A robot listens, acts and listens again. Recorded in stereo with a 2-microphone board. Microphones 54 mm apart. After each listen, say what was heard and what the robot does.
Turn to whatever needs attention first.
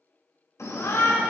Turn 90° left.
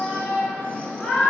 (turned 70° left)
So it is at 25° left. Turn 25° left.
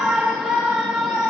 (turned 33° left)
The shout is now 10° right. Turn 10° right.
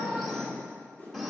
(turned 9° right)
Facing the shout, 1 to 2 m away.